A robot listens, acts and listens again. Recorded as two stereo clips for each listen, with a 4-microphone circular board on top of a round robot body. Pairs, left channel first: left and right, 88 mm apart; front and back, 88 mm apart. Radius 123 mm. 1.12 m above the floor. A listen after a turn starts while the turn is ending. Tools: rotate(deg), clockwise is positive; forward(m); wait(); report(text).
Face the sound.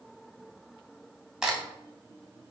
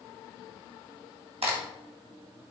rotate(175)
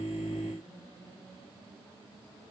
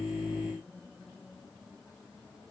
report("Facing where the crack came from. I can't hear it now.")